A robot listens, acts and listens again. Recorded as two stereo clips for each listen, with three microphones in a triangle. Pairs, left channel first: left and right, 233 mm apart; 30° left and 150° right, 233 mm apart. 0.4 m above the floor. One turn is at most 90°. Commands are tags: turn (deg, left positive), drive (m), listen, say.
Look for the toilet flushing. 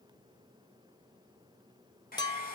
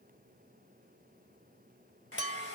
<listen/>
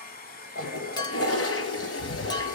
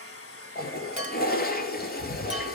<turn deg="75"/>
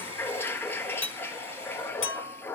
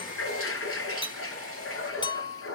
<turn deg="10"/>
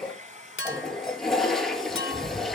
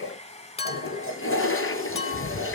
<say>Facing the toilet flushing, 1 to 2 m away.</say>